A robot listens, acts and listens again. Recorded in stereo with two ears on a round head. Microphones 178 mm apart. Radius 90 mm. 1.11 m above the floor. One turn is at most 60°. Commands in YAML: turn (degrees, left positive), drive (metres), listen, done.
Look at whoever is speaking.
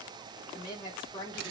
turn: 25
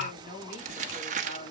turn: 60
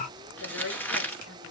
turn: 60
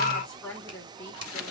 done: "Facing the woman speaking, 2 to 4 m away."